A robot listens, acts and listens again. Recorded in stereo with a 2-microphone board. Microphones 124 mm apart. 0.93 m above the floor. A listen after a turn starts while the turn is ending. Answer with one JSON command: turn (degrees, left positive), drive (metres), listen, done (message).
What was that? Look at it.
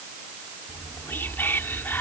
{"turn": 15}
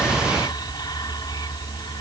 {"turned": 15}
{"turn": 145}
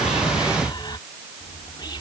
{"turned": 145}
{"turn": 40}
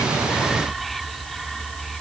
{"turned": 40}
{"done": "Facing the whispering."}